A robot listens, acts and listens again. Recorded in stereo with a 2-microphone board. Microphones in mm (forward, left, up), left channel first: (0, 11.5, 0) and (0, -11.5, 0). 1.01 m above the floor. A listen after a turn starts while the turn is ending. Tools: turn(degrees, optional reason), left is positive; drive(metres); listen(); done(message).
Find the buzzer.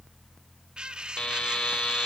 turn(degrees=45, reason="The buzzer: about 45° left or 135° left.")
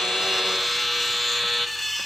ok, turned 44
done("Facing the buzzer.")